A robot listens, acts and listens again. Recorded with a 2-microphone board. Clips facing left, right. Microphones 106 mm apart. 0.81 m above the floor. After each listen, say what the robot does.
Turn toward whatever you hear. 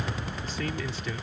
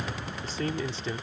Turn 30° right.
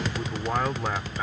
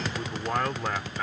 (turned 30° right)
Turn 10° left.
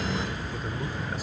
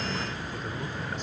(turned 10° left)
Keep listening.
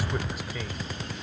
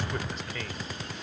Turn 10° left.
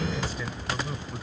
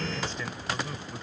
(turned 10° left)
Turn 10° left.
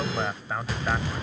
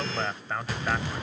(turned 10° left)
Facing the man speaking.